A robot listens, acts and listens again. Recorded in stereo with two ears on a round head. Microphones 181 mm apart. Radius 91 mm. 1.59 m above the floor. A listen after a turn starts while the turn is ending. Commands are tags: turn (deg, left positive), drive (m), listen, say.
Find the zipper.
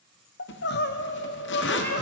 <turn deg="60"/>
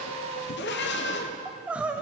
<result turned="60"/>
<listen/>
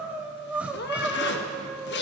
<turn deg="55"/>
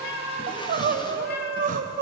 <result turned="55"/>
<listen/>
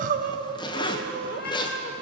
<turn deg="25"/>
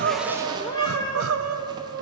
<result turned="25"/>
<listen/>
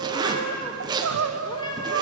<turn deg="-20"/>
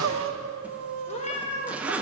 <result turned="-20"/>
<say>Facing the zipper.</say>